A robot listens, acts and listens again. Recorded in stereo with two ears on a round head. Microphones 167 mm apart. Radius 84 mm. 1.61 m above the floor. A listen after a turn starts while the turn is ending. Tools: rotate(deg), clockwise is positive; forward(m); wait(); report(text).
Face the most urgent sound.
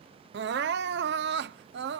rotate(65)
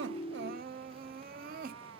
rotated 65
rotate(50)
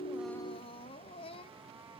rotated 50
rotate(-30)
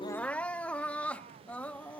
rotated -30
report("Found it: crying, straight ahead.")